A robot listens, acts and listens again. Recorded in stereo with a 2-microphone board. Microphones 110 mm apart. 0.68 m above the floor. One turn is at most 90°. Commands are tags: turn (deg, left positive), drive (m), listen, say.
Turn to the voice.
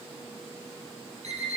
<listen/>
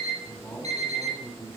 <turn deg="15"/>
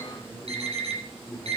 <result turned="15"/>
<say>Facing the man speaking.</say>